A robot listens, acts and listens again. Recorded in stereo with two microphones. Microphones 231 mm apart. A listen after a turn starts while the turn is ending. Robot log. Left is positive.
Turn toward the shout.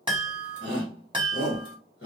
note: The shout: about 55° left or 125° left.
cmd yaw +55
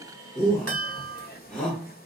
end: Found it: a shout, straight ahead.